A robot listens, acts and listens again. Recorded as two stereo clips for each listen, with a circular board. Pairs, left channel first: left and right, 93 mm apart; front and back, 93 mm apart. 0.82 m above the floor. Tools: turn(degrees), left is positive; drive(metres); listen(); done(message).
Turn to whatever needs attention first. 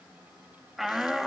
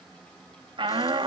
turn(degrees=-175)
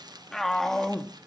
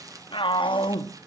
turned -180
done("Found it: a shout, straight ahead.")